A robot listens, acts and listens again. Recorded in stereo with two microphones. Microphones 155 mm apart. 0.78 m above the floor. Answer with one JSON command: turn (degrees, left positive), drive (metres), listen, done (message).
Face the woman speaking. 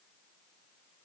{"listen": true}
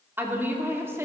{"turn": -15}
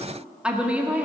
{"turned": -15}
{"turn": -30}
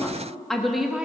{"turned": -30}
{"turn": -30}
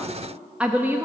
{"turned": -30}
{"turn": -15}
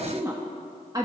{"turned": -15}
{"turn": -25}
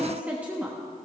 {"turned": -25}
{"turn": -30}
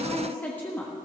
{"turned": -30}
{"turn": 10}
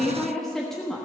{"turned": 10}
{"done": "Found it: a woman speaking, straight ahead, 1 to 2 m away."}